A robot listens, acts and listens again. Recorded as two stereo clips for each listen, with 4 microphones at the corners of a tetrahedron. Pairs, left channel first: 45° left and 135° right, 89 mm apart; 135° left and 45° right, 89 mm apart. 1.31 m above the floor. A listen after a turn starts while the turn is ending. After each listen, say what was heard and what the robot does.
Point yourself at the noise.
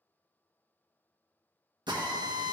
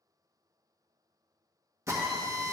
The drill: 100° right. Turn 100° right.
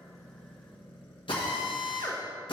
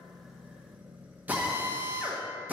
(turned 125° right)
The drill is now 25° left. Turn 25° left.
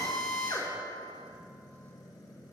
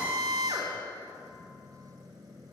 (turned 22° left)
Found it: a drill, straight ahead.